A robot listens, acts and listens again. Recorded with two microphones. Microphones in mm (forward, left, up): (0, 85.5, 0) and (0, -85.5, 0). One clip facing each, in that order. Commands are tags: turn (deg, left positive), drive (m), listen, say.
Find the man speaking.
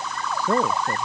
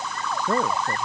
<turn deg="30"/>
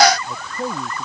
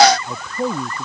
<turn deg="-15"/>
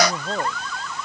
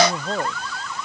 <say>Facing the man speaking.</say>